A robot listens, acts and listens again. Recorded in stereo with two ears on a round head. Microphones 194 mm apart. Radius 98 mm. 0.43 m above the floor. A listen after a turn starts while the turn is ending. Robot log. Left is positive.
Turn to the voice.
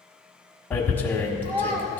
note: The child speaking: about 35° right or 145° right.
cmd yaw -35
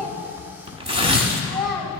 end: Found it: a child speaking, straight ahead.